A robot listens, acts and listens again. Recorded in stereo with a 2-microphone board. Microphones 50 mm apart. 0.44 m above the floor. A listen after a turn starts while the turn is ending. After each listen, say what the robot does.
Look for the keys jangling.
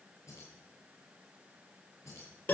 Turn 90° left.
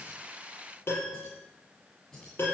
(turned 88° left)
Turn 10° left.
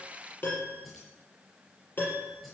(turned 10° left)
Facing the keys jangling, over 4 m away.